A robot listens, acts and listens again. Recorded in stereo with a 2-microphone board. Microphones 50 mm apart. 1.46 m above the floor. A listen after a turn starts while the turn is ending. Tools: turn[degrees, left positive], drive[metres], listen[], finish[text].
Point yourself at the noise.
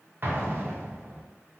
Thought: The explosion: about 45° right or 135° right.
Action: turn[-45]
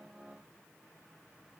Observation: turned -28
Action: listen[]
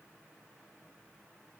Action: finish[I heard an explosion, but can't make it out now. It was about 15° right or 110° right.]